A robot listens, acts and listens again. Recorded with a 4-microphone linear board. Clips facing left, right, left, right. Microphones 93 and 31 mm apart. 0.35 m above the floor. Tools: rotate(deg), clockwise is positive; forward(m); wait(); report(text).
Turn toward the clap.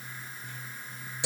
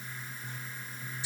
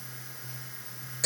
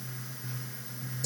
wait()
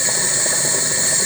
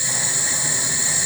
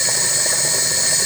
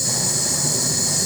wait()
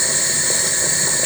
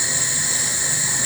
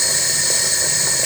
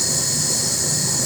report("I can't make out a clap to turn to.")